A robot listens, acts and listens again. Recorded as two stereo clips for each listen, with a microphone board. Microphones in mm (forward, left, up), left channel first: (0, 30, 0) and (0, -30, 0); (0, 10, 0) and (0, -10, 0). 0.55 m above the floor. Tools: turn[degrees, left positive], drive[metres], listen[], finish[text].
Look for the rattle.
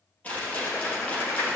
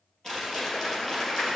Thought: The rattle: about 25° left or 155° left.
Action: turn[25]
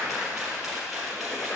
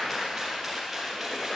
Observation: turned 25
Action: finish[Found it: a rattle, straight ahead.]